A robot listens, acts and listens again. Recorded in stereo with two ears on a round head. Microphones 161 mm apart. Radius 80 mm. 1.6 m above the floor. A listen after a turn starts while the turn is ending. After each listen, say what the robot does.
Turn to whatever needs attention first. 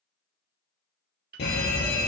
Turn 60° left.
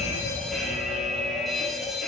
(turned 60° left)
Found it: a fire alarm, straight ahead, 2 to 4 m away.